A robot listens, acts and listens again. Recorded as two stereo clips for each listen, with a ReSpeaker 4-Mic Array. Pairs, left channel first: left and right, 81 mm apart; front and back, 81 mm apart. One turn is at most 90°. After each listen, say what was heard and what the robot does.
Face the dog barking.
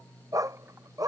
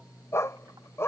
The dog barking: 55° right. Turn 55° right.
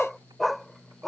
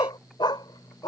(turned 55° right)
Found it: a dog barking, straight ahead.